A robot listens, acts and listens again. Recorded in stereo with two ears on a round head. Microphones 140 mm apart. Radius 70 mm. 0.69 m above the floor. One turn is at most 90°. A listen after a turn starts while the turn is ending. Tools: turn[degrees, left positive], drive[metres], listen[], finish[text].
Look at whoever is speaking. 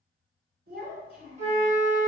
Thought: The child speaking: about 65° right or 115° right.
Action: turn[-65]
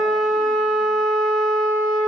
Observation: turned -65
Action: listen[]
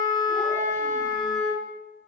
Action: listen[]
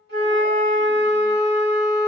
Action: finish[I heard a child speaking, but can't make it out now. It was about straight ahead or 50° right.]